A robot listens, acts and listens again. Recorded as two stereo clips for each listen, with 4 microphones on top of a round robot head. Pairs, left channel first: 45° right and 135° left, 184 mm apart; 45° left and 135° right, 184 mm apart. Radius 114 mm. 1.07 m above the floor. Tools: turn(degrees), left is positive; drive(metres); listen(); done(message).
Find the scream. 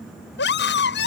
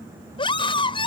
turn(degrees=-20)
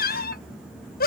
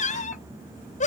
done("Found it: a scream, straight ahead.")